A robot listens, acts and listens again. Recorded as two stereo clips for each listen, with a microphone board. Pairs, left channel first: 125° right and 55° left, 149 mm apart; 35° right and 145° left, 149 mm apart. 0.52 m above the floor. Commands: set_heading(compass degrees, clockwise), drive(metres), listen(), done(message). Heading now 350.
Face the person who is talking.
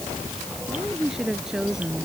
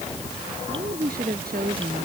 set_heading(205)
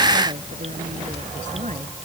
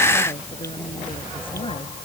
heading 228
set_heading(208)
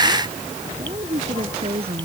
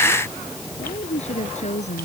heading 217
set_heading(207)
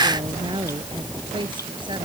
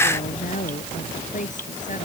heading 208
done("Facing the woman speaking.")